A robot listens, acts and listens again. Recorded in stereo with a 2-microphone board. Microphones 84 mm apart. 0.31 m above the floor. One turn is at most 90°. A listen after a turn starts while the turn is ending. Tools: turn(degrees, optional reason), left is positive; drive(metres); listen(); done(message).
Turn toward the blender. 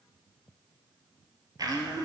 turn(degrees=-50, reason="The blender: about 50° right or 130° right.")
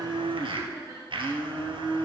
turn(degrees=-80, reason="So it is at 80° right.")
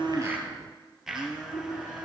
done("Found it: a blender, straight ahead.")